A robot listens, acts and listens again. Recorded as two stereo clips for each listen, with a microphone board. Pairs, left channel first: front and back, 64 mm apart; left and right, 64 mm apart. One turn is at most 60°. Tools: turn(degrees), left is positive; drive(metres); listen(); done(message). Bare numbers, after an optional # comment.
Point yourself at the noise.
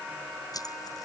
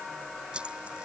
# The keys jangling: 15° right.
turn(-15)
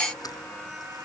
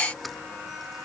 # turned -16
listen()
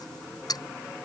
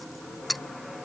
done("Found it: keys jangling, straight ahead.")